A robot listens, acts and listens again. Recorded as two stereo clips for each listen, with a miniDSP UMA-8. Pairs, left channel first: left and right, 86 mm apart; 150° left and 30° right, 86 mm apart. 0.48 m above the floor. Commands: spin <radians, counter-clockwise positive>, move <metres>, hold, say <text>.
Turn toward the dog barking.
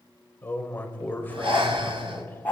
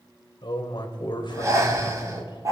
spin 0.35
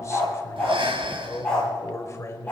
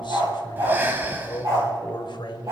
spin 0.26
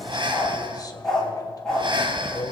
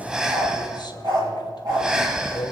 say Found it: a dog barking, straight ahead.